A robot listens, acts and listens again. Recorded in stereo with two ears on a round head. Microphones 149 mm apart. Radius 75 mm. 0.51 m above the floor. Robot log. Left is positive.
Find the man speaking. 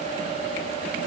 cmd idle
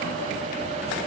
cmd idle
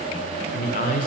note: The man speaking: about 50° left or 130° left.
cmd yaw +50
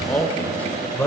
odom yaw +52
note: So it is at 10° left.
cmd yaw +10
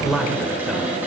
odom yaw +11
end: Found it: a man speaking, straight ahead, 1 to 2 m away.